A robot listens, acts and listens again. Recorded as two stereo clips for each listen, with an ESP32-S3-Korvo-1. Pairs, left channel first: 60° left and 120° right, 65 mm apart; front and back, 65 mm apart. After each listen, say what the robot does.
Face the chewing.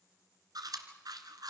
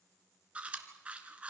Turn 110° right.
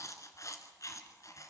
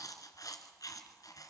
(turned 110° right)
Turn 25° left.
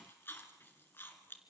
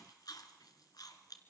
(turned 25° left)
Facing the chewing, 2 to 4 m away.